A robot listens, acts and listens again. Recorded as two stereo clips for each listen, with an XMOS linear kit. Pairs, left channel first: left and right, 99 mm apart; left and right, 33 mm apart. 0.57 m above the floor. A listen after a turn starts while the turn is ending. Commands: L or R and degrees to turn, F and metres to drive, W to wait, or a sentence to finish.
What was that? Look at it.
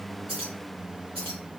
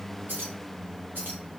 R75
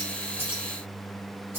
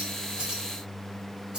R20
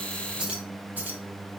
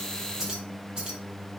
R20
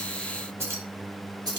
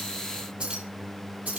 R45
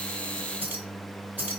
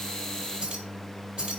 R15
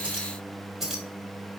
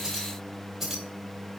Found it: keys jangling, straight ahead.